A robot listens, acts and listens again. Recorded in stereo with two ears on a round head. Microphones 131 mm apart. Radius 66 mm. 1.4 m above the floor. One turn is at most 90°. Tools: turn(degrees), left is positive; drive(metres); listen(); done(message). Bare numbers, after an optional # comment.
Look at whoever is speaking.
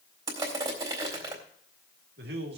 turn(-90)
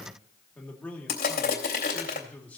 # So it is at 10° left.
turn(10)
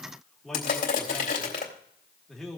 done("Facing the man speaking.")